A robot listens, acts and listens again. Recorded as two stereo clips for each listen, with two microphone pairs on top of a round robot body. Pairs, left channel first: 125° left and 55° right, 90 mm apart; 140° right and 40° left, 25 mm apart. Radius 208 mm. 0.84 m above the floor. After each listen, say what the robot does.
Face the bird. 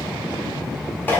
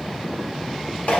Keep listening.
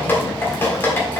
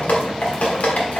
Keep listening.
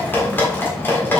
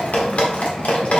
I can't make out a bird, only dripping.